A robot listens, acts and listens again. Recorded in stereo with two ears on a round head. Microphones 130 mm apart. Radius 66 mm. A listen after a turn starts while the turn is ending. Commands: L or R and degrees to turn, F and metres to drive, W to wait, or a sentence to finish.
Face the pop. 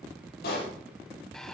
L90
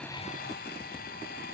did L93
Facing where the pop came from. I can't hear it now.